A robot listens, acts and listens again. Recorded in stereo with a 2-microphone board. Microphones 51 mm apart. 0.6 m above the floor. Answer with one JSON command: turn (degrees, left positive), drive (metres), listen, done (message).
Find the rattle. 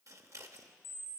{"listen": true}
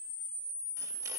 {"listen": true}
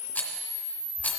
{"turn": 35}
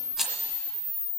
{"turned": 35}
{"done": "Found it: a rattle, straight ahead."}